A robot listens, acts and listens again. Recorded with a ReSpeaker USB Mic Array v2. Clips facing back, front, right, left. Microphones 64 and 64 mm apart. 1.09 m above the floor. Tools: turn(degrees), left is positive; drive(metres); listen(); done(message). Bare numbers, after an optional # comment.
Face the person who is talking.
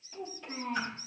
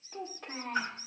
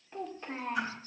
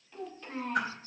# The child speaking: 25° right.
turn(-25)
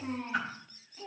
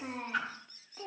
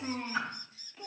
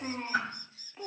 # The child speaking is now 30° left.
turn(30)
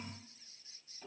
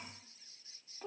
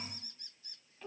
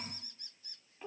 # The child speaking is now 20° left.
turn(20)
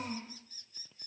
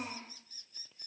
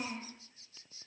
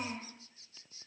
done("Found it: a child speaking, straight ahead.")